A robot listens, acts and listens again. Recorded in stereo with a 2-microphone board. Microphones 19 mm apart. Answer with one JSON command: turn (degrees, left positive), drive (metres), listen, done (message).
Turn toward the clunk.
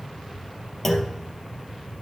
{"turn": 30}
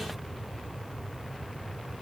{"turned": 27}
{"listen": true}
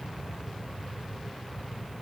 {"done": "I heard a clunk, but can't make it out now. It was about 15° right or 140° left."}